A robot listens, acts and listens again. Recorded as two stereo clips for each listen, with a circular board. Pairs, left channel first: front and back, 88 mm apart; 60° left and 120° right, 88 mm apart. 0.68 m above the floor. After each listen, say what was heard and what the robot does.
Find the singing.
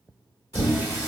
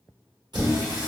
The singing: 125° right. Turn 125° right.
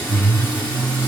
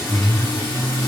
The singing is now 80° left. Turn 80° left.
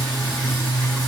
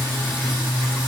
The singing is now 20° left. Turn 20° left.
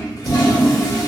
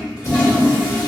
Keep listening.
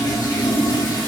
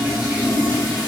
Keep listening.
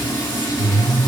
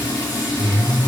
The singing is now 15° left. Turn 15° left.
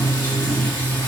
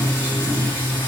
Found it: singing, straight ahead.